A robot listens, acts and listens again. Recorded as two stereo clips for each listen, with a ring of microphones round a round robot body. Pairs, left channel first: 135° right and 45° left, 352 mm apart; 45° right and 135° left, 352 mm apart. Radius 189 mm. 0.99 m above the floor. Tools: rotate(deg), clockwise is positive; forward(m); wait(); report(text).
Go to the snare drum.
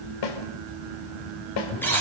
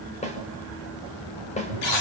rotate(115)
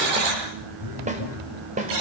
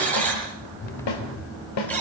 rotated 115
rotate(25)
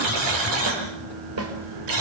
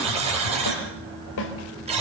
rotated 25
forward(1.0)
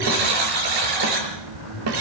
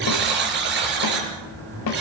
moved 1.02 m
forward(1.0)
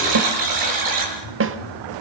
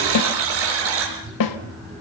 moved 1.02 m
rotate(10)
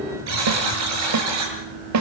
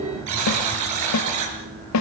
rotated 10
forward(1.0)
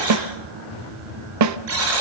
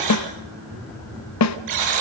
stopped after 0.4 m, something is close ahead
report("Arrived at the snare drum, straight ahead.")